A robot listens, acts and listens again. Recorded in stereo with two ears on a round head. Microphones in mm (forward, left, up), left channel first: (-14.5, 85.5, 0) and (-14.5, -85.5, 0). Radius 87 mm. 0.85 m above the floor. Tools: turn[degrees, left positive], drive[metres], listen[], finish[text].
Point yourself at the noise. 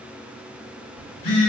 Thought: The phone buzzing: about 60° left or 120° left.
Action: turn[60]
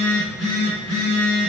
Action: finish[Found it: a phone buzzing, straight ahead, 1 to 2 m away.]